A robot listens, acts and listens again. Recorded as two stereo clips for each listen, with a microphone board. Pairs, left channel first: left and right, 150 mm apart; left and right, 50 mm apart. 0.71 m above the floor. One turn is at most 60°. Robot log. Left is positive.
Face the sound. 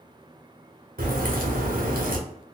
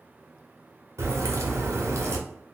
note: The crack: about 75° right or 105° right.
cmd yaw -60
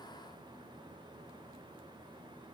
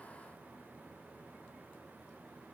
cmd idle
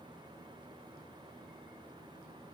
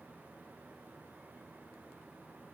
end: I heard a crack, but can't make it out now. It was about 15° right or 45° right.